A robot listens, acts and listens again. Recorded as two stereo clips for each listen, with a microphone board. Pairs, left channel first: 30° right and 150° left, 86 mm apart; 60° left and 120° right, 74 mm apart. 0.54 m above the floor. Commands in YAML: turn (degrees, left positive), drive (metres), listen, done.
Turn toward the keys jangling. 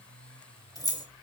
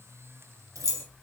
turn: -70
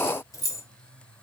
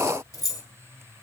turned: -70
turn: 25
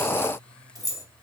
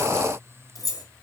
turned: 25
turn: 25
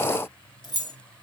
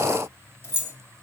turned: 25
done: "Found it: keys jangling, straight ahead."